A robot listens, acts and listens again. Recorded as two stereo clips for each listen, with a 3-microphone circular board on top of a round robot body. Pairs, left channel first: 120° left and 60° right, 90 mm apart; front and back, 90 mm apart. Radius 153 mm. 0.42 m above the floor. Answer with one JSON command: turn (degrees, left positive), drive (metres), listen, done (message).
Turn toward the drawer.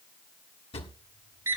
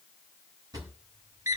{"turn": 125}
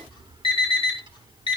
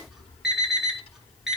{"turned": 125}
{"listen": true}
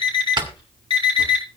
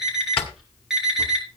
{"turn": -20}
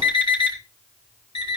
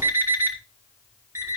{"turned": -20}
{"listen": true}
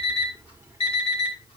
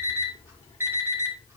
{"listen": true}
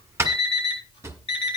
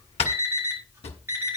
{"done": "Facing the drawer, 1 to 2 m away."}